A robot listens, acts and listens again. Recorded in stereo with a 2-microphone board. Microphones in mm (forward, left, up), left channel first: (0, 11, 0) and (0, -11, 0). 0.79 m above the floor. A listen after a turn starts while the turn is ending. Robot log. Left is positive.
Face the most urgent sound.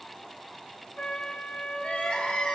note: The crying: about 75° left or 105° left.
cmd yaw +75
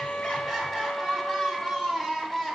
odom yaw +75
note: So it is at 15° left.
cmd yaw +15
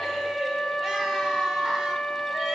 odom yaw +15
cmd idle
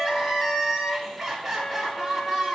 end: Found it: crying, straight ahead, 2 to 4 m away.